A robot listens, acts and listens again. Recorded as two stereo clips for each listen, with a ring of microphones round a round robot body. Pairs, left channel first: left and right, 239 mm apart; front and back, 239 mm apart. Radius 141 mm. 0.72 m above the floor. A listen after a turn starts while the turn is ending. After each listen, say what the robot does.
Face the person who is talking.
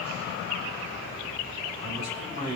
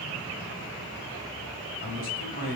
Turn 45° right.
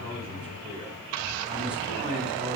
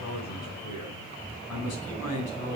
Facing the man speaking, over 4 m away.